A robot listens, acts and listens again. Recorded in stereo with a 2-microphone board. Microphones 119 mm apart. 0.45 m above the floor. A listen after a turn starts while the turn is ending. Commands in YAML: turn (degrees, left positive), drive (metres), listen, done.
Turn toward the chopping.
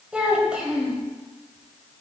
listen: true
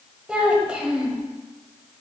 listen: true
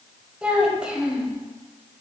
done: "I can't make out chopping, only a child speaking."